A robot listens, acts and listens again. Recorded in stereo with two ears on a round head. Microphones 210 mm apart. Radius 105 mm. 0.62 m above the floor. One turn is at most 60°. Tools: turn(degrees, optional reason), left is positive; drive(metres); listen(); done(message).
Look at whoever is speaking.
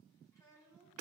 turn(degrees=30)
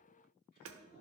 listen()
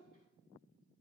turn(degrees=60, reason="So it is at 135° left.")
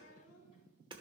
turn(degrees=60, reason="The child speaking is now 100° left.")
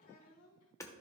turn(degrees=60, reason="The child speaking is now 60° left.")
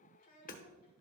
turn(degrees=35, reason="The child speaking is now 35° left.")
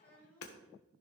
turn(degrees=10, reason="The child speaking is now 10° left.")
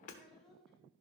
done("Found it: a child speaking, straight ahead, 2 to 4 m away.")